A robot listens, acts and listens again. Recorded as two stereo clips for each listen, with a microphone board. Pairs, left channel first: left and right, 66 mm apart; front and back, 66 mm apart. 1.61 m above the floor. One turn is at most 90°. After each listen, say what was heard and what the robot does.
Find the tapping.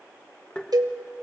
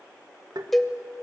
The tapping: 165° left. Turn 90° left.
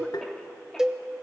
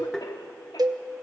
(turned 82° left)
Nothing new. It was at 85° left. Turn 85° left.
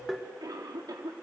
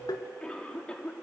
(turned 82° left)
Facing the tapping.